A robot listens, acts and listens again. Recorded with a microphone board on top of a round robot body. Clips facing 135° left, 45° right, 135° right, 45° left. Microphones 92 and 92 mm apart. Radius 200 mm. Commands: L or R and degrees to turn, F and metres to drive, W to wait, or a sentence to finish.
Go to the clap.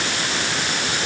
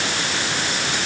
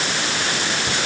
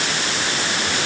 W
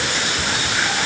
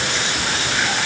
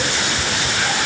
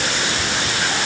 W
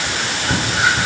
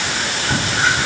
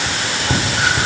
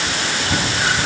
I can't make out a clap, only whispering.